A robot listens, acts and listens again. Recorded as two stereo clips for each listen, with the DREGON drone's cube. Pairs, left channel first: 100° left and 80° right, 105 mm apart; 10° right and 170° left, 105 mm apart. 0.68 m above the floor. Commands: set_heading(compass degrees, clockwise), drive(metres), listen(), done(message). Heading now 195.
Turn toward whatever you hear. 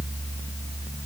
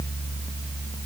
listen()
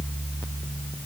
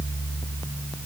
listen()
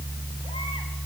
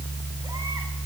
done("I can't make out anything to turn to.")